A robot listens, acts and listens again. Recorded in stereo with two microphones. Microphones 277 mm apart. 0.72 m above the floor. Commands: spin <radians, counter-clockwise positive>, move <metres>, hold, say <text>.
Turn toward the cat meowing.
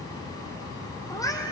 spin 0.52
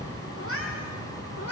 spin 2.18
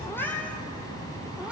say Found it: a cat meowing, straight ahead, 2 to 4 m away.